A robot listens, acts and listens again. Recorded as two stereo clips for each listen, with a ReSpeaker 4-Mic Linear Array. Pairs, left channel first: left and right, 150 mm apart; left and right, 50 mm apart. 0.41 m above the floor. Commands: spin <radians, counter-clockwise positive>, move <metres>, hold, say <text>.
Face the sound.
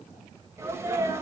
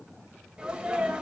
spin -0.35
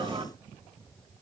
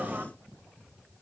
spin -2.44
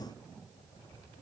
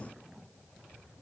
say Facing where the sneeze came from. I can't hear it now.